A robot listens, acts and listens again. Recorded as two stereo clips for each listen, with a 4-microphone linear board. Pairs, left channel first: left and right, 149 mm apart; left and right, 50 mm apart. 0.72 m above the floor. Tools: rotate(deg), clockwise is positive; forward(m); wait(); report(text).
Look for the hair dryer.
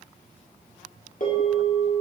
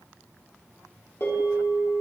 wait()
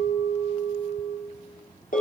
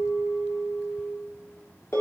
wait()
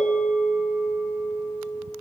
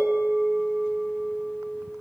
report("I can't make out a hair dryer, only a bell.")